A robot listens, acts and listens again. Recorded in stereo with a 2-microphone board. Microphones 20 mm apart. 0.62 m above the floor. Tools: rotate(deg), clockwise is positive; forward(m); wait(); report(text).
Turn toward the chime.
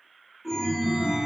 rotate(30)
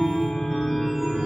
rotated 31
rotate(140)
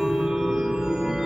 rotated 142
report("Facing the chime.")